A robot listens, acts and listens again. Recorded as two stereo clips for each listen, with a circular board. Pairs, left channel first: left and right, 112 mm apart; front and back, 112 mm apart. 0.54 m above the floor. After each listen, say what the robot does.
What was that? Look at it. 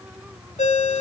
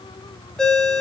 Turn 85° left.
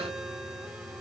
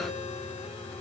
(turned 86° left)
Keep listening.
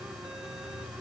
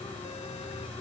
Keep listening.
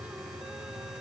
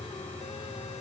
I heard a ringtone from this way, but can't make it out now.